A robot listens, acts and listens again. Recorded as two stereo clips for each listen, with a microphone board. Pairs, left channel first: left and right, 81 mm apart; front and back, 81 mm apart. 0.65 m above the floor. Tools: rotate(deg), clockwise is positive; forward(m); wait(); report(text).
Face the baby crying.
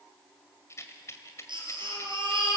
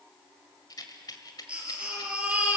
rotate(105)
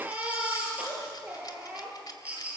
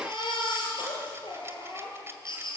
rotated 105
rotate(15)
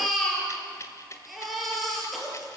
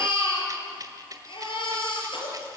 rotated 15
report("Found it: a baby crying, straight ahead, over 4 m away.")